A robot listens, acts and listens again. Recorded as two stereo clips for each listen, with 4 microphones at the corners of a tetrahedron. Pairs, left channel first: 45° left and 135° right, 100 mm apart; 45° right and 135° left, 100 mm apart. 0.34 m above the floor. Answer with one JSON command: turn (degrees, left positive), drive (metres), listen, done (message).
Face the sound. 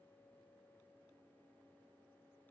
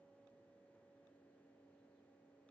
{"listen": true}
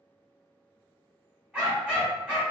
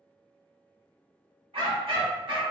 {"turn": 145}
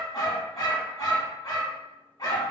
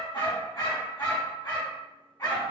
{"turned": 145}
{"done": "Facing the dog barking, 1 to 2 m away."}